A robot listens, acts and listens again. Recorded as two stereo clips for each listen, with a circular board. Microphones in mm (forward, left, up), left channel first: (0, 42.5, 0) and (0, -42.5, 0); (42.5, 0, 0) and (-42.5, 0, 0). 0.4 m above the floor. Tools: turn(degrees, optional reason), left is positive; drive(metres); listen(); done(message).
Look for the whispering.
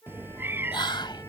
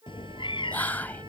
turn(degrees=70, reason="The whispering: 70° left.")
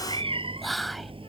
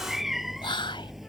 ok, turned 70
done("Found it: whispering, straight ahead.")